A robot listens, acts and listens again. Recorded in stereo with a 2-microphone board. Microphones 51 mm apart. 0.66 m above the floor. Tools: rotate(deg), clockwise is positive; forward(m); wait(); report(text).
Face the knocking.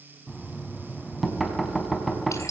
rotate(-30)
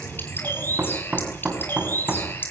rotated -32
rotate(35)
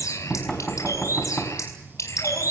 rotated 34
report("Found it: knocking, straight ahead.")